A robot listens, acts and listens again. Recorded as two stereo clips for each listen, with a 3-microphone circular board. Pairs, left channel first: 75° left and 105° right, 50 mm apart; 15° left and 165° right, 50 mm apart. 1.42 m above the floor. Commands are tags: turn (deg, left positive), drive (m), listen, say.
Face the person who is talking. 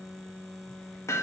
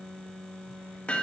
<listen/>
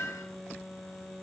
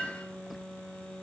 <listen/>
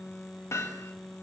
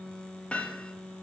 <say>I can't make out anyone speaking, only hammering.</say>